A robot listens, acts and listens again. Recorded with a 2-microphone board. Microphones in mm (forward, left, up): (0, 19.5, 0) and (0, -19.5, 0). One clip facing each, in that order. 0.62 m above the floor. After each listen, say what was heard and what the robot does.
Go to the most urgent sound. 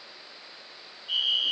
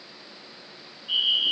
The fire alarm: about 15° right or 165° right. Turn 15° right.
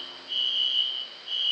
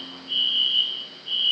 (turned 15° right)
So it is at 155° right. Turn 155° right.
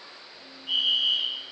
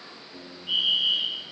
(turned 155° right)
The fire alarm is now 10° right. Turn 10° right.
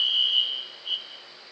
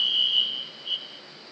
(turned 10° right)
Drive 1.0 m forward.
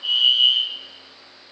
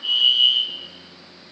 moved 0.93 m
Drive 1.0 m forward.
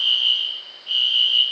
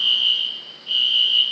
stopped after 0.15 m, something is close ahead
The fire alarm is now 10° right. Turn 10° right.
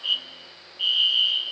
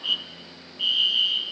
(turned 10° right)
I am next to the fire alarm.